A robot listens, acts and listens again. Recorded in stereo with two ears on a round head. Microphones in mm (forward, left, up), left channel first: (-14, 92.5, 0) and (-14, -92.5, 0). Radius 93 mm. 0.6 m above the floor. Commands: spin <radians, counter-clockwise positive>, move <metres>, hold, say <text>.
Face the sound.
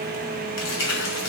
spin 1.22
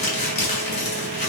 spin 0.61
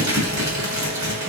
spin -0.35
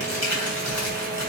say Facing the crumpling, 2 to 4 m away.